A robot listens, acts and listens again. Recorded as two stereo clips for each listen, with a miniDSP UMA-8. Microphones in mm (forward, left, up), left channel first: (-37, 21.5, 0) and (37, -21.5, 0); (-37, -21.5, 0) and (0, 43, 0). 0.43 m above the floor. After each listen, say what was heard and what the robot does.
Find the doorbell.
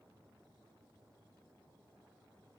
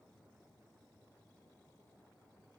Keep listening.
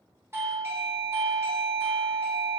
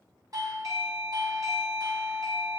The doorbell: 25° left. Turn 25° left.
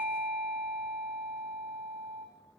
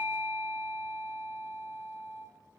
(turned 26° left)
Found it: a doorbell, straight ahead, 2 to 4 m away.